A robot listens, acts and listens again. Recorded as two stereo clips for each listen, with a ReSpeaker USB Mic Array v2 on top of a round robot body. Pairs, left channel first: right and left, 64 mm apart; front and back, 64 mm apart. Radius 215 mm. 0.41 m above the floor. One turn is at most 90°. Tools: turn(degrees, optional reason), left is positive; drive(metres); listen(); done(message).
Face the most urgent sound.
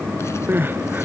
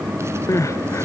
turn(degrees=35, reason="The crying: 35° left.")
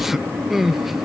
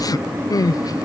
done("Found it: crying, straight ahead.")